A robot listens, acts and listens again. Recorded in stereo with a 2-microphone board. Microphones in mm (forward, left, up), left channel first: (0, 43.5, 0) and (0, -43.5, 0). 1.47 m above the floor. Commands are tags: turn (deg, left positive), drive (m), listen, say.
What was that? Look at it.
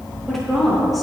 <turn deg="30"/>
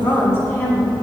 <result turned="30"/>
<turn deg="150"/>
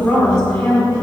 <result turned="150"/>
<turn deg="10"/>
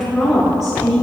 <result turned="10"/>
<say>Found it: a woman speaking, straight ahead, over 4 m away.</say>